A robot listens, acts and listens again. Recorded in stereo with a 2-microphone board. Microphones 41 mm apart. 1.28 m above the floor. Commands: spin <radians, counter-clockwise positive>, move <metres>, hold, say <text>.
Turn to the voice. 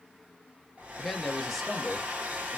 spin 0.52
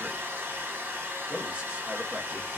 spin -0.61
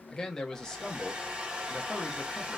spin 0.26
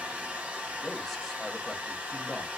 hold
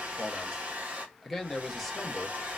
say Facing the man speaking, under 1 m away.